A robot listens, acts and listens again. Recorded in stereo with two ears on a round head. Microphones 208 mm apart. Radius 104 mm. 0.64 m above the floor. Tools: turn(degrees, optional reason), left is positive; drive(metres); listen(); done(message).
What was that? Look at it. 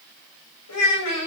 turn(degrees=90)
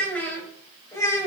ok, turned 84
turn(degrees=15, reason="So it is at 15° left.")
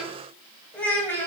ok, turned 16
turn(degrees=10, reason="The child speaking is now 10° left.")
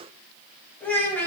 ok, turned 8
turn(degrees=10, reason="The child speaking is now 10° left.")
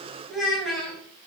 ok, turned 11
done("Facing the child speaking.")